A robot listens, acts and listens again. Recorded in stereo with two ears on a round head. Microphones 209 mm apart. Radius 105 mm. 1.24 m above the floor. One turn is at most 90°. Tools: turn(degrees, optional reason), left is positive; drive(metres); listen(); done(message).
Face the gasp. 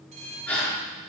turn(degrees=30)
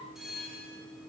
listen()
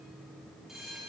done("I heard a gasp, but can't make it out now. It was about 25° right or 145° left.")